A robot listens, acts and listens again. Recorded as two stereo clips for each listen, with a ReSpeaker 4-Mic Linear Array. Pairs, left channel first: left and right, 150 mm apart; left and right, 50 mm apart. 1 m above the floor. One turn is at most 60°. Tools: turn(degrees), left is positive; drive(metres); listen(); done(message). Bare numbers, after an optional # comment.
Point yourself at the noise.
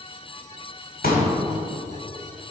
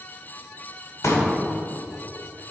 turn(60)
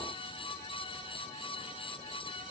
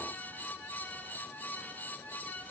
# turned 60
# Nothing new. It was at 30° left.
turn(30)
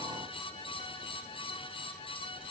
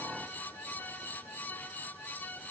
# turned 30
done("I heard a pop from this way, but can't make it out now.")